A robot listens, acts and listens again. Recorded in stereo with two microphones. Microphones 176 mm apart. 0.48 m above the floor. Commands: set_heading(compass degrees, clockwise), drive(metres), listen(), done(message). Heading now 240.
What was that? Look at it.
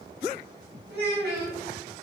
set_heading(310)
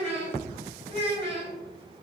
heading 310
set_heading(345)
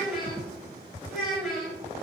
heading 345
done("Facing the child speaking, 1 to 2 m away.")